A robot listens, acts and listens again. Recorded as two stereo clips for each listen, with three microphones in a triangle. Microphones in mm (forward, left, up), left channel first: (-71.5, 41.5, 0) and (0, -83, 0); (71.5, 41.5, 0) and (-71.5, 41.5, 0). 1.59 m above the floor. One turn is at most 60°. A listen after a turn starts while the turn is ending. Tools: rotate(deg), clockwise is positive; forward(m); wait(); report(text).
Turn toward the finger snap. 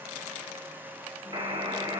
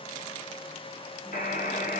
wait()
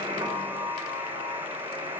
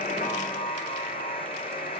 wait()
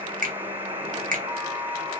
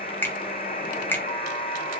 rotate(60)
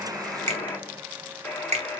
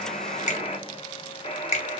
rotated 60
rotate(25)
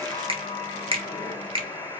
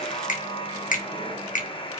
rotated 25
rotate(15)
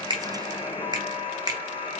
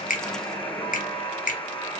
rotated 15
report("Facing the finger snap.")